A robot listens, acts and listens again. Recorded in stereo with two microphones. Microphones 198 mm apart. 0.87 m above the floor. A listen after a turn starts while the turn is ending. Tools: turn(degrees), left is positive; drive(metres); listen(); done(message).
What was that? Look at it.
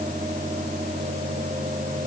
listen()
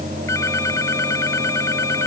turn(degrees=30)
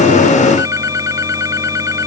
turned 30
turn(degrees=-15)
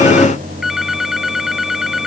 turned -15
done("Facing the phone ringing.")